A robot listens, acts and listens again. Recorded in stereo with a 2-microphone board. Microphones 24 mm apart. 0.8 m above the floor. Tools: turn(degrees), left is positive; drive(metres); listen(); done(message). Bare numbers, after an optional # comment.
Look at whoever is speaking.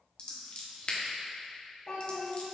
# The child speaking: about 35° left or 145° left.
turn(35)
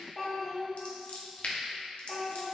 done("Facing the child speaking.")